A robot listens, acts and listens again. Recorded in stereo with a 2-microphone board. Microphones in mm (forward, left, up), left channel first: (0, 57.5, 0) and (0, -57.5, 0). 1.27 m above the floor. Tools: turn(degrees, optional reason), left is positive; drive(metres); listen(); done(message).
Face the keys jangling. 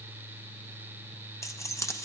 turn(degrees=25, reason="The keys jangling: about 25° left or 155° left.")
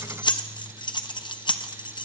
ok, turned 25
turn(degrees=125, reason="So it is at 125° left.")
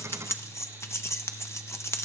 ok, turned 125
turn(degrees=30, reason="The keys jangling is now 30° left.")
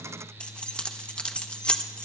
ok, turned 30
turn(degrees=10, reason="The keys jangling is now 10° left.")
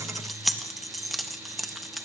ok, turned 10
done("Found it: keys jangling, straight ahead.")